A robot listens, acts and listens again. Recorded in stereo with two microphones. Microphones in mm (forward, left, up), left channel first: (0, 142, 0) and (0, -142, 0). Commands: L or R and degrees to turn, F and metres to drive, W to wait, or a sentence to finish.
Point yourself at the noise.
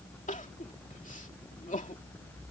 L25
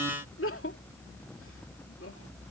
L130
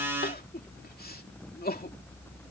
L35
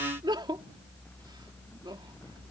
R15
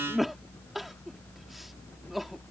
Facing the crying.